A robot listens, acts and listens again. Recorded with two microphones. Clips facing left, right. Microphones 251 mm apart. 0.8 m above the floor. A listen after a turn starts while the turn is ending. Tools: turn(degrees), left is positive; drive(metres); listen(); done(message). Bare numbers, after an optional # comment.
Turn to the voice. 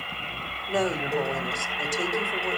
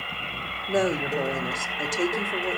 # The woman speaking: about 20° right or 160° right.
turn(-20)
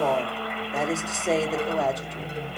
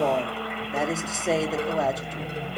done("Facing the woman speaking.")